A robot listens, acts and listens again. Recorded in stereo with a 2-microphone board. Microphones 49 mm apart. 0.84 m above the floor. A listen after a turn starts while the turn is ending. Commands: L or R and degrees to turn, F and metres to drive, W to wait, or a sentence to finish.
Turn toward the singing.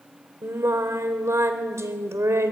R90
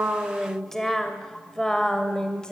L15
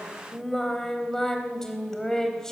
L10
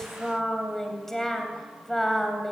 Facing the singing.